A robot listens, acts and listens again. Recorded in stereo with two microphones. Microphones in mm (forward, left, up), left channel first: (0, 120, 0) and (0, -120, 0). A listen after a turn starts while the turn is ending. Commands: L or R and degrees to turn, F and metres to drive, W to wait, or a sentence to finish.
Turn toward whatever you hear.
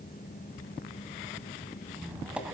R30
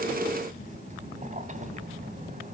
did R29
R145
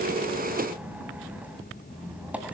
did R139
Facing the squeak, 1 to 2 m away.